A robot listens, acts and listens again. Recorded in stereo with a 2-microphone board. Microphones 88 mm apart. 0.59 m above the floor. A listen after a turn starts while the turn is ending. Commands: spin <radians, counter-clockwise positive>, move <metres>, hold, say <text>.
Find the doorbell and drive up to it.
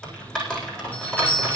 spin 0.35
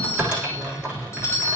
spin 2.44
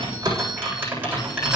hold
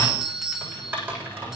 spin -0.17
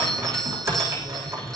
move 1.0
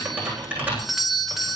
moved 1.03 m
move 1.0
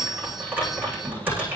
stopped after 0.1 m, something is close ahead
say Arrived at the doorbell, straight ahead.